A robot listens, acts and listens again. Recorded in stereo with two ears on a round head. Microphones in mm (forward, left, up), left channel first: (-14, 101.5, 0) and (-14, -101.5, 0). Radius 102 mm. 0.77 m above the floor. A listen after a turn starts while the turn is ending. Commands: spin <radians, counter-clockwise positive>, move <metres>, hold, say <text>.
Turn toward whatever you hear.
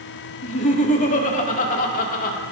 spin 0.61
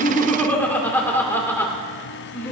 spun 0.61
spin 0.17
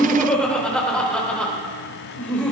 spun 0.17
say Found it: laughter, straight ahead, 2 to 4 m away.